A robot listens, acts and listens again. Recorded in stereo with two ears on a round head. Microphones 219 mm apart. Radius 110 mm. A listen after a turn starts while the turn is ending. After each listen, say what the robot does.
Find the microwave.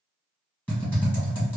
Keep listening.
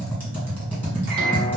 Turn 40° right.
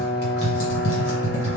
Turn 10° right.
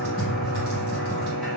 Found it: a microwave, straight ahead, 1 to 2 m away.